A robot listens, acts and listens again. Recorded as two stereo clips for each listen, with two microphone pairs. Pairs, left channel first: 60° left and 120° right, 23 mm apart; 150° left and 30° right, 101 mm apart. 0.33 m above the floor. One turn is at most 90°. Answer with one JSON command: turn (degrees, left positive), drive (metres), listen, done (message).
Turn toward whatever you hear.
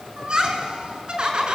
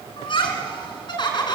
{"turn": -90}
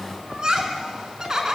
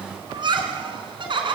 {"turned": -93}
{"turn": -60}
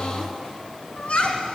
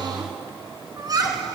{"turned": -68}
{"turn": 20}
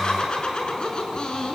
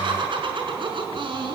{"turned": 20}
{"done": "Facing the laughter, over 4 m away."}